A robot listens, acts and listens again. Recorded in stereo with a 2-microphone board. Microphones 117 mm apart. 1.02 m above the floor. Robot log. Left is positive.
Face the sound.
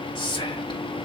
note: The whispering: about 40° left or 140° left.
cmd yaw +40
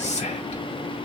note: So it is at 95° left.
cmd yaw +95
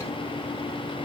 cmd idle
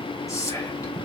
note: The whispering is now 30° left.
cmd yaw +30
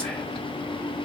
cmd idle
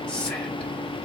note: The whispering is now 10° left.
cmd yaw +10
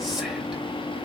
cmd idle
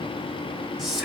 end: Facing the whispering.